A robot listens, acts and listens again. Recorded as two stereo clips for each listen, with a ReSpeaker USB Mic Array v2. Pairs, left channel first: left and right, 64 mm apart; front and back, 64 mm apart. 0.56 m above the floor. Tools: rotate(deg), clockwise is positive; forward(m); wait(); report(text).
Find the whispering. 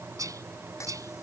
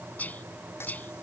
rotate(65)
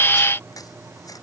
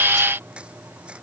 wait()
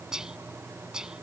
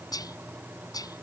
rotate(10)
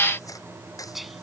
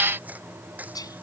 report("Found it: whispering, straight ahead.")